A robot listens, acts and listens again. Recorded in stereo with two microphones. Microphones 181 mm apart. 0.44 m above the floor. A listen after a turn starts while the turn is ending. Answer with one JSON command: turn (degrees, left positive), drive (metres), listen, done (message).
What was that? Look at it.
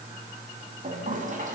{"turn": -45}
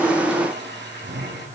{"turn": -85}
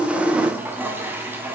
{"turn": -10}
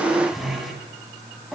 {"done": "Found it: a toilet flushing, straight ahead, 2 to 4 m away."}